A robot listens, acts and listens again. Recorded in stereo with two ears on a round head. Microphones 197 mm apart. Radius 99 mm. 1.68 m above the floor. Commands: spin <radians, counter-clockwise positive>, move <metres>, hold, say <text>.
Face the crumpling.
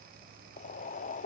hold
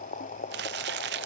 spin -0.87
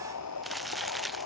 say Facing the crumpling.